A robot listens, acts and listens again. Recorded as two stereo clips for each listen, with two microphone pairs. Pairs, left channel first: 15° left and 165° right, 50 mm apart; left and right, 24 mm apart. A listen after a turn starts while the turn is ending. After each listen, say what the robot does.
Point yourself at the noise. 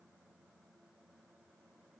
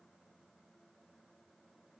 Keep listening.
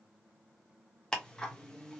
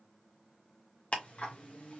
Turn 85° left.
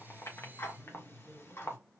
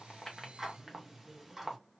Facing the ticking, under 1 m away.